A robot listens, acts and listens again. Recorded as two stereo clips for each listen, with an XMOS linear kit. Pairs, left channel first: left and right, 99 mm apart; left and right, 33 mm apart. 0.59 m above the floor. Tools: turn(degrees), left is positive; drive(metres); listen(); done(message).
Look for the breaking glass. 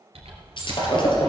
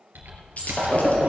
turn(degrees=55)
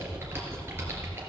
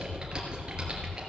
listen()
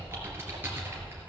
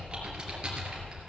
done("I heard breaking glass, but can't make it out now. It was about straight ahead or 70° left.")